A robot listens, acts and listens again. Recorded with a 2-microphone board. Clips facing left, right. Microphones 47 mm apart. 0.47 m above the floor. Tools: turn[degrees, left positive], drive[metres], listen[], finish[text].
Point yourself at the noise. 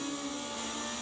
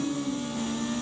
Action: listen[]
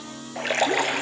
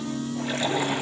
Thought: The splash: about 70° left or 110° left.
Action: turn[70]
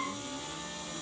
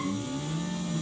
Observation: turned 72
Action: listen[]
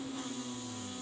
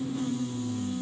Action: finish[I heard a splash, but can't make it out now. It was about straight ahead or 35° left.]